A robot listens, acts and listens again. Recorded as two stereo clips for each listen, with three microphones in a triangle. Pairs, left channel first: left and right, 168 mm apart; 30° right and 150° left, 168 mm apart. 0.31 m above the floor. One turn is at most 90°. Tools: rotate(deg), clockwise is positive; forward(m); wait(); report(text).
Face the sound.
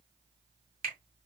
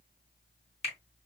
rotate(70)
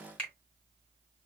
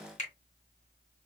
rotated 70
rotate(-10)
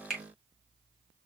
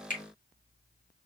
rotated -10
report("Facing the finger snap.")